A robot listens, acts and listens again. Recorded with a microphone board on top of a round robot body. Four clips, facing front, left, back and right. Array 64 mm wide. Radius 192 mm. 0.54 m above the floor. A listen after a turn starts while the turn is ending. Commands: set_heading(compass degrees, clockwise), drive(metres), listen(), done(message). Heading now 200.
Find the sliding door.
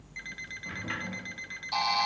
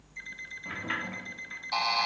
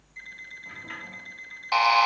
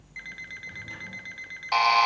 set_heading(120)
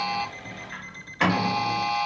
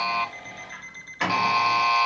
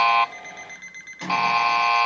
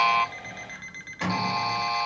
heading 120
set_heading(100)
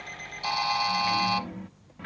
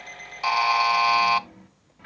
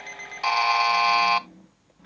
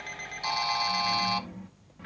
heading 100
done("Facing the sliding door, under 1 m away.")